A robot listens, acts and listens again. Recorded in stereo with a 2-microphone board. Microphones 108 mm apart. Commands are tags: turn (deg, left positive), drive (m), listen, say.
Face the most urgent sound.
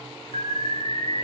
<turn deg="-75"/>
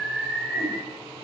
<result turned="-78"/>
<say>Found it: an alarm, straight ahead.</say>